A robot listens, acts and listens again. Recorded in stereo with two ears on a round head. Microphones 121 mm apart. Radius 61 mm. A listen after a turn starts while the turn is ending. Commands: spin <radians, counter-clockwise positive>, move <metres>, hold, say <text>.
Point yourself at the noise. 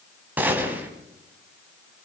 spin -0.52
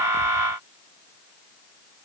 hold
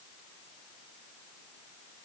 say I heard a gunshot, but can't make it out now. It was about 20° left or 140° right.